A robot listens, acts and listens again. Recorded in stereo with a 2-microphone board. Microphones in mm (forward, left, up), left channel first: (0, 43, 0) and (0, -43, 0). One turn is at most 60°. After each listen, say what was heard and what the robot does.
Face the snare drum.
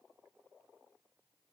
Keep listening.
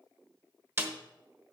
The snare drum: about 30° right or 150° right. Turn 30° right.
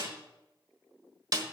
So it is at 120° right. Turn 60° right.
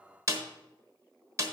The snare drum is now 45° right. Turn 45° right.
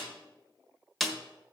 Facing the snare drum, 1 to 2 m away.